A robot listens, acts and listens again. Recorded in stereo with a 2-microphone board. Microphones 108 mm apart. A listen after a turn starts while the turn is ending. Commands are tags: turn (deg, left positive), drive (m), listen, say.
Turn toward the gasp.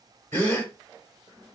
<turn deg="15"/>
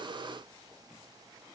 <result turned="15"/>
<listen/>
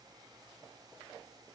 <say>I heard a gasp, but can't make it out now. It was about straight ahead or 150° left.</say>